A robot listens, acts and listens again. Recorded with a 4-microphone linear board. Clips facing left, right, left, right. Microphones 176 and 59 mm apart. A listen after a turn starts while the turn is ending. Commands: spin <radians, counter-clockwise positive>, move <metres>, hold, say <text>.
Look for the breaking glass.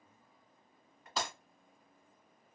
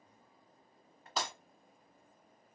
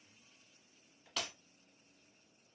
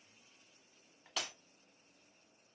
spin 0.52
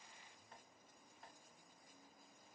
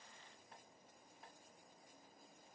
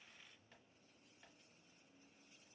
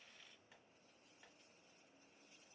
hold
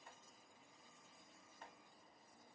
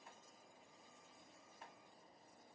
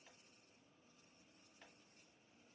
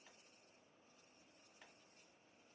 say I heard breaking glass, but can't make it out now. It was about 30° right or 150° left.